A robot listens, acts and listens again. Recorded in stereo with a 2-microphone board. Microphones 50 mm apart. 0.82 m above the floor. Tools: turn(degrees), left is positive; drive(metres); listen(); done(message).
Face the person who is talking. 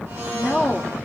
turn(degrees=-30)
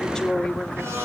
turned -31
turn(degrees=30)
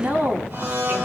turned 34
turn(degrees=-40)
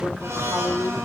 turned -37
turn(degrees=-20)
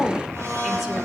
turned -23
done("Found it: a woman speaking, straight ahead.")